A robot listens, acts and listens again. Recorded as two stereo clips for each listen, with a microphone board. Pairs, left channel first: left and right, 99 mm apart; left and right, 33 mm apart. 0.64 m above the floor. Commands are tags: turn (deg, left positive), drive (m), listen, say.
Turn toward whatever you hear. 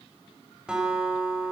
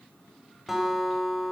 <turn deg="-30"/>
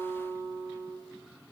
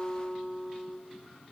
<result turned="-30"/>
<turn deg="-140"/>
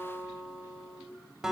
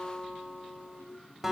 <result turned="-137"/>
<say>Found it: a guitar, straight ahead, 2 to 4 m away.</say>